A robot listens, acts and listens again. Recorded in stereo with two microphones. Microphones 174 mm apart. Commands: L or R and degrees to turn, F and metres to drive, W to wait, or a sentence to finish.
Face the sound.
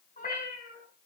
L45
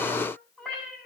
Found it: a cat meowing, straight ahead.